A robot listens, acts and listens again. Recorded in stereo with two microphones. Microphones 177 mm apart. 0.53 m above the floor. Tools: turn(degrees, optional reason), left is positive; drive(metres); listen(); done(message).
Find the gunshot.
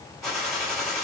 turn(degrees=30)
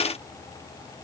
listen()
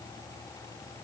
done("I heard a gunshot, but can't make it out now. It was about 30° right or 150° left.")